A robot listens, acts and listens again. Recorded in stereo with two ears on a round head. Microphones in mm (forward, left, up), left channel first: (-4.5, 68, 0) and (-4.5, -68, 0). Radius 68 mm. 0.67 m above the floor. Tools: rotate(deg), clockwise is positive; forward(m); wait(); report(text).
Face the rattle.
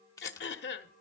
rotate(-20)
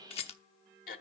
rotate(-135)
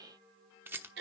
rotate(15)
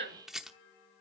report("Facing the rattle, under 1 m away.")